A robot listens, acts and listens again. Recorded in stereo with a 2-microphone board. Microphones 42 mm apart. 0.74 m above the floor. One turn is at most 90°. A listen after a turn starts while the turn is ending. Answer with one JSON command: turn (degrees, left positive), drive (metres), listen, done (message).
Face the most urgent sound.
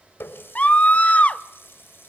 {"turn": 35}
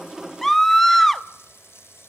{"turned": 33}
{"turn": 10}
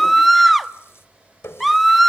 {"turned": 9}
{"done": "Found it: a scream, straight ahead."}